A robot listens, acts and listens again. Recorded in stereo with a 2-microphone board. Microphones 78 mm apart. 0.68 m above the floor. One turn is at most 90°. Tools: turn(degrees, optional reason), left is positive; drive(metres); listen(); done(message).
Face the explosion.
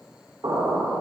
turn(degrees=-70, reason="The explosion: about 70° right or 110° right.")
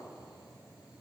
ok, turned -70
listen()
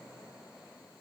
done("I heard an explosion, but can't make it out now. It was about straight ahead or 40° right.")